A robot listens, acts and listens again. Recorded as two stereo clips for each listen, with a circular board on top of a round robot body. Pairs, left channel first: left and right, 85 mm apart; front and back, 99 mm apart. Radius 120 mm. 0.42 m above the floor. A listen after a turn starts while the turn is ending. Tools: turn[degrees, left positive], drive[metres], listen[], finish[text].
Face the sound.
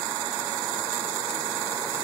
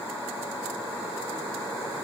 Action: listen[]
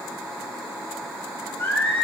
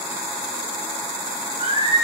Thought: The singing: 155° left.
Action: turn[155]
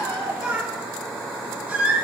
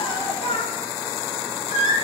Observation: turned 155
Thought: The singing is now 20° right.
Action: turn[-20]
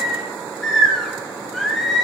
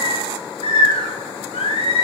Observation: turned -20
Action: finish[Facing the singing, over 4 m away.]